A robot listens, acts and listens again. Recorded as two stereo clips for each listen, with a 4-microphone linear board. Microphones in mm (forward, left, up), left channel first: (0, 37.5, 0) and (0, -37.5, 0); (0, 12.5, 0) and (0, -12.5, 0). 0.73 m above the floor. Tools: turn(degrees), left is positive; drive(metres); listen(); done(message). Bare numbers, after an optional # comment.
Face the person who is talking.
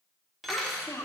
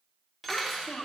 # The child speaking: about 35° left or 145° left.
turn(35)
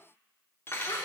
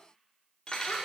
listen()
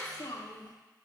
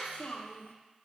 # So it is at 110° left.
turn(110)
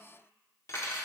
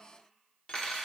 listen()
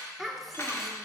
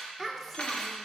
done("Found it: a child speaking, straight ahead.")